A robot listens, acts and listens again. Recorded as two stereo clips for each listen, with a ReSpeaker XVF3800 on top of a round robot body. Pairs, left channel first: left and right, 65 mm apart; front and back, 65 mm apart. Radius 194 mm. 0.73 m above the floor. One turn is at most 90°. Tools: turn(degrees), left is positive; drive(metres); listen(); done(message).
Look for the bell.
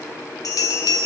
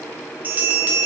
turn(degrees=90)
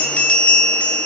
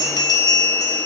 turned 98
turn(degrees=20)
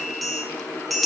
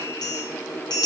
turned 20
done("Facing the bell.")